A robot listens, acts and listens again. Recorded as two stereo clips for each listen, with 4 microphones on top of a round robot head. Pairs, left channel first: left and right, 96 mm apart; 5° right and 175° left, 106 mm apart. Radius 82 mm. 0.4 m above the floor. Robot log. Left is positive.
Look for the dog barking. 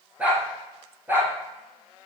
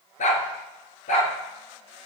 note: The dog barking: 15° right.
cmd yaw -15
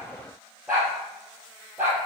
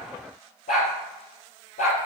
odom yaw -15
note: The dog barking is now 10° right.
cmd yaw -10
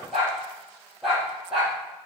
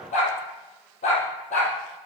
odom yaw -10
end: Found it: a dog barking, straight ahead.